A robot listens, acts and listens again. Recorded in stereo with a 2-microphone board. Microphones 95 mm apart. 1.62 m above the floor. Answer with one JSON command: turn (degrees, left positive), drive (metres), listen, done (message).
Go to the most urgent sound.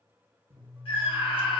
{"turn": 70}
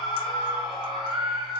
{"drive": 1.0}
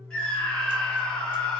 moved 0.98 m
{"turn": 10}
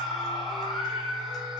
{"drive": 1.0}
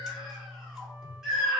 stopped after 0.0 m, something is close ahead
{"done": "I am next to the scream."}